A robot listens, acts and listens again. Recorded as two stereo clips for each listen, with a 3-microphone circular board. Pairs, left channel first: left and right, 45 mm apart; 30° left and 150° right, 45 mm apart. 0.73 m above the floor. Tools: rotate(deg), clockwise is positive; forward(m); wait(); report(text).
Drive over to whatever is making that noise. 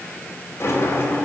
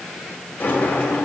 rotate(-85)
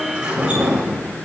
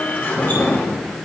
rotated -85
rotate(20)
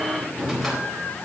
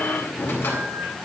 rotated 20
forward(1.0)
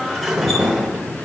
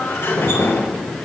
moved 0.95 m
forward(1.0)
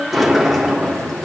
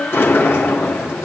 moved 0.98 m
forward(1.0)
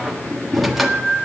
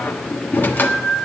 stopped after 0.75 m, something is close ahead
report("I am next to the sliding door.")